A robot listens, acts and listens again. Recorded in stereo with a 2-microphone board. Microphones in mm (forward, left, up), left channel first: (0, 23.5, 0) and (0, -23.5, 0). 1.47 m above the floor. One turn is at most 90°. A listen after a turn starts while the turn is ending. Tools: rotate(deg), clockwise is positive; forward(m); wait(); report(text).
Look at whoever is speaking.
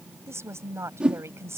rotate(65)
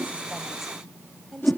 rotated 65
report("Found it: a woman speaking, straight ahead.")